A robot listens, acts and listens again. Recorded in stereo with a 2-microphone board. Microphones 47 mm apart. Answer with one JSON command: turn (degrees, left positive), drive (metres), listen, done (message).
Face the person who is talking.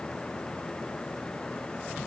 {"listen": true}
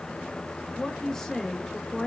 {"turn": 30}
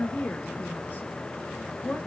{"turn": 140}
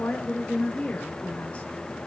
{"turn": 35}
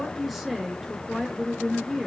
{"done": "Facing the woman speaking, 1 to 2 m away."}